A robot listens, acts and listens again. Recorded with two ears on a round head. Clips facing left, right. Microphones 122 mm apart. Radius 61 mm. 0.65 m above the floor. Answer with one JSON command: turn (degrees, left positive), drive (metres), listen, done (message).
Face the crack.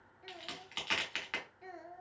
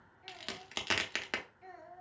{"turn": -50}
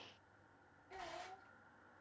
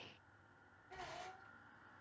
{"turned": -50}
{"listen": true}
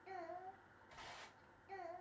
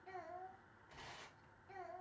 {"done": "I heard a crack, but can't make it out now. It was about straight ahead or 80° right."}